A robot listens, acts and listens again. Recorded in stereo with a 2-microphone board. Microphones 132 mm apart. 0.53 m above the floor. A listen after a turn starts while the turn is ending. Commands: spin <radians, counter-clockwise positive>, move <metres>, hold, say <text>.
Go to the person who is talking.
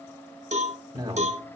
spin -0.52
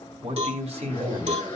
spin -2.09
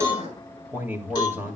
spin -0.26
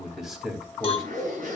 move 1.0
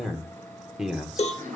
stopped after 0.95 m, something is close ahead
say I am next to the man speaking.